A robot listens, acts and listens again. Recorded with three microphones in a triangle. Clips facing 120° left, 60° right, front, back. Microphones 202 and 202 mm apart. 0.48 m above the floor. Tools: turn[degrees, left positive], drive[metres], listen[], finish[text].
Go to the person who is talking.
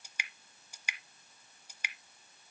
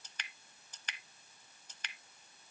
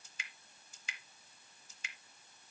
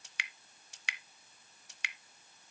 Action: listen[]
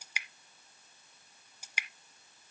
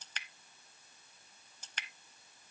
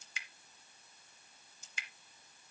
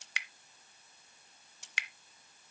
Action: listen[]
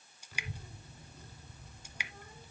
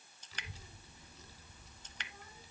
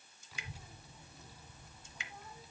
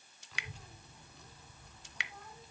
Thought: The child speaking: 85° left.
Action: turn[85]
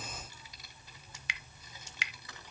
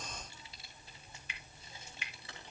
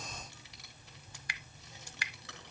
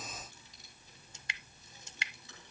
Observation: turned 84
Action: drive[1.0]
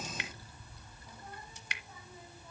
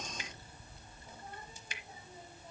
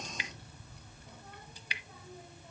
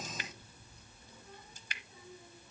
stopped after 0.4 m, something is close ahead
Action: finish[Something is in my way. I am facing the child speaking but have not reached it.]